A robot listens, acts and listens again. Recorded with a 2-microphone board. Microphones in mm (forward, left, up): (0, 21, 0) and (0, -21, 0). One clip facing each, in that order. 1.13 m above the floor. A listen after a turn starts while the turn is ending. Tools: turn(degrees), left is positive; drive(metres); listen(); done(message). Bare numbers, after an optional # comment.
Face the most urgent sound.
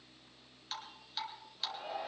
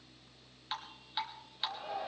turn(30)
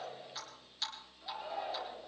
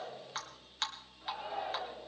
# So it is at 20° right.
turn(-20)
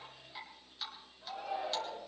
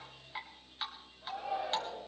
done("Found it: a shout, straight ahead.")